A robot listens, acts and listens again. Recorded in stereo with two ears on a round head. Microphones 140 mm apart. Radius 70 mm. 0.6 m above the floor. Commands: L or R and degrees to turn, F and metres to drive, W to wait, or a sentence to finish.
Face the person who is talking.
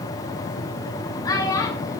L20
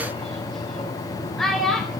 Found it: a child speaking, straight ahead, 2 to 4 m away.